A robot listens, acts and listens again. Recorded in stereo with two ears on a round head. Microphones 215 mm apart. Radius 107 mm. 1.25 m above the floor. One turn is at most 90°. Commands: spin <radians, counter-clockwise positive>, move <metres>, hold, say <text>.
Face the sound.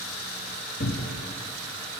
spin 0.61
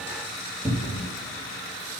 say Facing the cupboard door.